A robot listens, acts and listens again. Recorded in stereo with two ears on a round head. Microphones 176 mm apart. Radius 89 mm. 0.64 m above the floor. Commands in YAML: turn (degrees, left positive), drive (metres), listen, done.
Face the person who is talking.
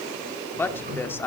turn: 30
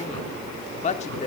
turn: 135
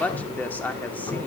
turn: 10
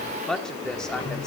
done: "Facing the woman speaking."